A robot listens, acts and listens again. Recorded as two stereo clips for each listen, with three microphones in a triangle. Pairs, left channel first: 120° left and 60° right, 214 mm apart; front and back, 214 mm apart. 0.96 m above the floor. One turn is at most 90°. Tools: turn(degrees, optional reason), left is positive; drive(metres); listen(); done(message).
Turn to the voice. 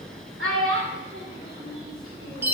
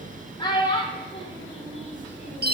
turn(degrees=-65, reason="The child speaking: 65° right.")
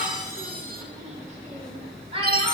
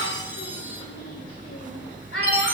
done("Found it: a child speaking, straight ahead, 2 to 4 m away.")